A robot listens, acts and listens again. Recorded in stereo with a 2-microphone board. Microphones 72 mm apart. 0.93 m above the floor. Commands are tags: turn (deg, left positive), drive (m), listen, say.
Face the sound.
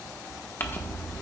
<turn deg="30"/>
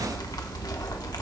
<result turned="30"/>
<turn deg="120"/>
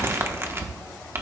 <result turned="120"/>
<turn deg="-35"/>
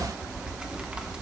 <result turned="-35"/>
<turn deg="-15"/>
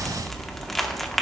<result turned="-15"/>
<say>Facing the crumpling.</say>